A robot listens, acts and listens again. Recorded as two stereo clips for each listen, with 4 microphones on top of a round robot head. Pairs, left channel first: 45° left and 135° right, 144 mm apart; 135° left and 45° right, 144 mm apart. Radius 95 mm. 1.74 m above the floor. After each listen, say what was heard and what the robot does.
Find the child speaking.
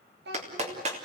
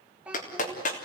The child speaking: 125° right. Turn 125° right.
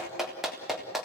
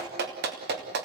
Keep listening.
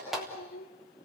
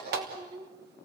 The child speaking is now 20° left. Turn 20° left.
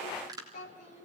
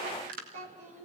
Facing the child speaking, over 4 m away.